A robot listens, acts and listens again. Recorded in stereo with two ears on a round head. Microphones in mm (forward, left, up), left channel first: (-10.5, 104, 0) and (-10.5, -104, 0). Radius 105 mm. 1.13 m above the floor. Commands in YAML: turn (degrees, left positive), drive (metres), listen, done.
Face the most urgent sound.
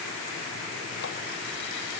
listen: true
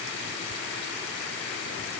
listen: true
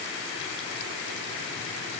done: "I can't make out anything urgent."